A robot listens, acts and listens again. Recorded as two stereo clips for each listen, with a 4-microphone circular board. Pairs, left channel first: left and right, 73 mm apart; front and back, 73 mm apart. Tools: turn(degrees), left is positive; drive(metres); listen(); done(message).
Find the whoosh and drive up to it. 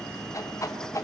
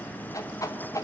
turn(degrees=45)
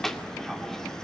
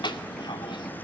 drive(metres=1.0)
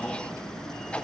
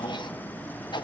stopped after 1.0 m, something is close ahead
turn(degrees=15)
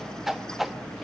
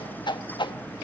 done("I am next to the whoosh.")